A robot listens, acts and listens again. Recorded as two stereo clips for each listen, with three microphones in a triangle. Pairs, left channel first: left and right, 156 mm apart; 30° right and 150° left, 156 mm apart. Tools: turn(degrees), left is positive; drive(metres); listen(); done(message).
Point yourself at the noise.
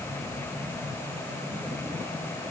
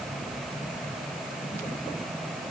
listen()
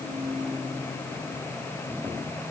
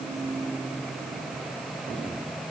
listen()
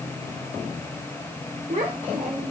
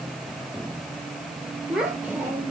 turn(degrees=-125)
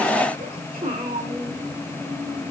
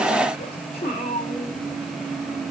turn(degrees=-40)
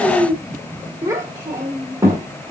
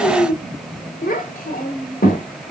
turn(degrees=-20)
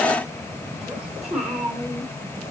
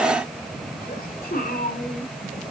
done("Facing the child speaking, 1 to 2 m away.")